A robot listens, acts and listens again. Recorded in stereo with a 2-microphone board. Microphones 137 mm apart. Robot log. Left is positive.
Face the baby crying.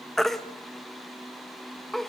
cmd yaw +30
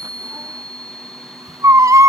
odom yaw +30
note: So it is at 25° right.
cmd yaw -25
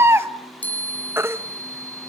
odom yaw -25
note: The baby crying is now 20° right.
cmd yaw -20
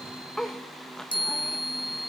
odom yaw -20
cmd idle
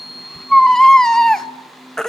end: Facing the baby crying, 1 to 2 m away.